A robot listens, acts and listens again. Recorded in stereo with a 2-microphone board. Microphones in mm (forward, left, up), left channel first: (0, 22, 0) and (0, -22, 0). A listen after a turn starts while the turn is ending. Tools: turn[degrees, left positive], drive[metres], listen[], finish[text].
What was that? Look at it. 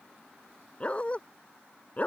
Thought: The dog barking: about 35° left or 145° left.
Action: turn[35]
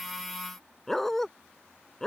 Thought: So it is at 15° left.
Action: turn[15]
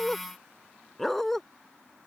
Thought: The dog barking is now 10° left.
Action: turn[10]
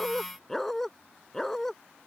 Thought: The dog barking is now 10° left.
Action: turn[10]
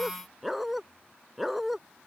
Action: finish[Found it: a dog barking, straight ahead.]